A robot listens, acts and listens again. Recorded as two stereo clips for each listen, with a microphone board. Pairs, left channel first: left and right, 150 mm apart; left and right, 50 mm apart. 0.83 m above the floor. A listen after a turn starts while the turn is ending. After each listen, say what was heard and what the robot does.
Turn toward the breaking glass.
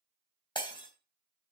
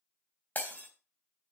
The breaking glass: about 30° left or 150° left. Turn 30° left.
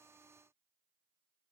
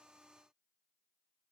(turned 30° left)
Keep listening.
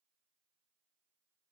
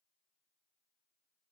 I heard breaking glass, but can't make it out now. It was about straight ahead or 120° left.